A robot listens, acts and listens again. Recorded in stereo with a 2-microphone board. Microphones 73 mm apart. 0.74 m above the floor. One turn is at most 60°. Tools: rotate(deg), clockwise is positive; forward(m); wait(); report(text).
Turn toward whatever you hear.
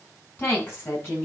rotate(-30)
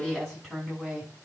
report("Found it: a woman speaking, straight ahead.")